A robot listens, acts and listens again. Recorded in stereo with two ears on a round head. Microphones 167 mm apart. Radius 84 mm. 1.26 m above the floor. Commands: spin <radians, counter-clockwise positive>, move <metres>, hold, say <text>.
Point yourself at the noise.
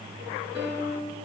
spin -0.35
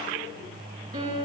spin -2.36
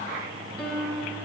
spin 0.17
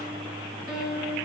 say Facing the piano.